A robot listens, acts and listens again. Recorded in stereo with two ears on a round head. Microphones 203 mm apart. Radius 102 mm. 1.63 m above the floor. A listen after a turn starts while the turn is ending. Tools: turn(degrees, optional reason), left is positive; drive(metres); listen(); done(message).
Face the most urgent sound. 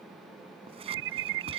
turn(degrees=-60, reason="The alarm: about 60° right or 120° right.")
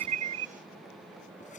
listen()
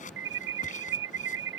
turn(degrees=-55, reason="So it is at 55° right.")
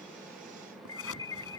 turn(degrees=15, reason="The alarm is now 15° left.")
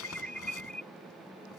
done("Facing the alarm.")